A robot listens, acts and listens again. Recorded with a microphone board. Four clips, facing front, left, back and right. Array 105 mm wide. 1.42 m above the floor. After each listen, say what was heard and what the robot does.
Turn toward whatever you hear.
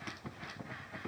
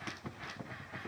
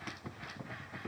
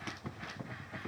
Keep listening.
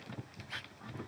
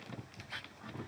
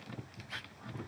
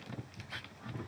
Keep listening.
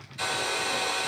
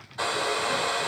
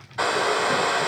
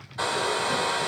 The hair dryer: 175° right. Turn 175° right.
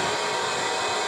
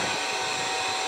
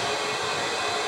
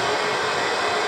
The hair dryer is now 80° right. Turn 80° right.
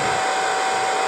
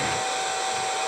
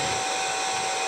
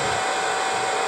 The hair dryer is now 25° right. Turn 25° right.
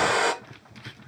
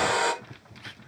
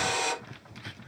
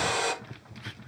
The hair dryer is now 20° left. Turn 20° left.
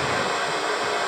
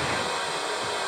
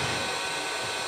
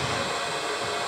Facing the hair dryer.